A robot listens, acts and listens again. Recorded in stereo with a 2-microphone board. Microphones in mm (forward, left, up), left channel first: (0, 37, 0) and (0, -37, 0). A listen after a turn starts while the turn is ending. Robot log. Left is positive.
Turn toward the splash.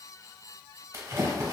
note: The splash: about 40° right or 140° right.
cmd yaw -40
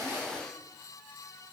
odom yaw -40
cmd idle
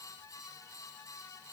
end: I heard a splash, but can't make it out now. It was about straight ahead or 100° right.